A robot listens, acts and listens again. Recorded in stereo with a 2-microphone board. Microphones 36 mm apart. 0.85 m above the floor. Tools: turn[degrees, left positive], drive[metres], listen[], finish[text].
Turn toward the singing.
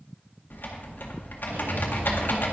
Action: listen[]
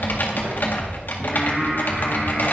Action: turn[-30]
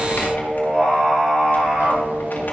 Action: turn[-30]
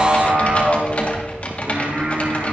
Thought: So it is at 130° right.
Action: turn[-130]
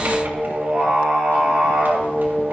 Thought: The singing is now 15° right.
Action: turn[-15]
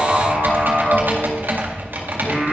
Action: finish[Found it: singing, straight ahead.]